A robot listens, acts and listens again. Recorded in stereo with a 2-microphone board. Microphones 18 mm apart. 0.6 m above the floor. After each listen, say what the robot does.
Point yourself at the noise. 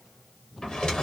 Turn 50° left.
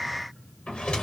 Turn 85° left.
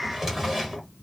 Turn 15° right.
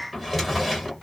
Facing the drawer, 1 to 2 m away.